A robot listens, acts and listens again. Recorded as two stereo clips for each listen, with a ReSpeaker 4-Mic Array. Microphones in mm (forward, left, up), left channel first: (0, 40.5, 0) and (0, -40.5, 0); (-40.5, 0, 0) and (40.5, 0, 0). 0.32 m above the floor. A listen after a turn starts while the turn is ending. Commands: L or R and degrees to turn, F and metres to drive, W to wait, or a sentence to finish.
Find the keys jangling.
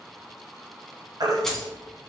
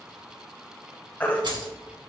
Found it: keys jangling, straight ahead.